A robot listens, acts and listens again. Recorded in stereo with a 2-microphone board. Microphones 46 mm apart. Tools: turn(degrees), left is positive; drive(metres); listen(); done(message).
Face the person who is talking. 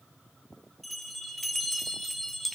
listen()
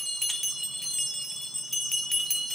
listen()
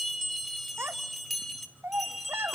turn(degrees=-60)
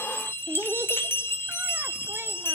turn(degrees=-60)
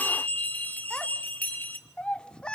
turn(degrees=20)
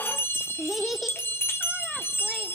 done("Found it: a child speaking, straight ahead, 1 to 2 m away.")